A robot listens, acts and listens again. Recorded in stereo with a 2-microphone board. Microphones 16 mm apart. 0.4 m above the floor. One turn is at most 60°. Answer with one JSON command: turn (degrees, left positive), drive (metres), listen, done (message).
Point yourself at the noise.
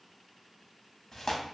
{"turn": 35}
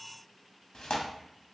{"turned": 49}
{"turn": 60}
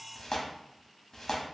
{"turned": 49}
{"turn": 45}
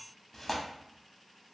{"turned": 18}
{"turn": 30}
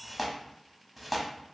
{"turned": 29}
{"done": "Facing the tearing paper, under 1 m away."}